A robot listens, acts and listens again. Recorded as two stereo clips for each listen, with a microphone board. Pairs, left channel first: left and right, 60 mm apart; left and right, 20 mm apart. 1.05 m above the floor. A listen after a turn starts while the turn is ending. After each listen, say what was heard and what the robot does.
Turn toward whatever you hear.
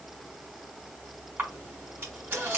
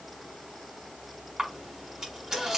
The camera shutter: about 35° right or 145° right. Turn 35° right.
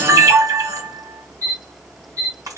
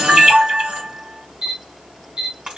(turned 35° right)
So it is at 110° right. Turn 110° right.
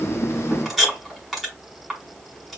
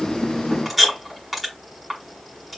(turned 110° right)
Found it: a camera shutter, straight ahead.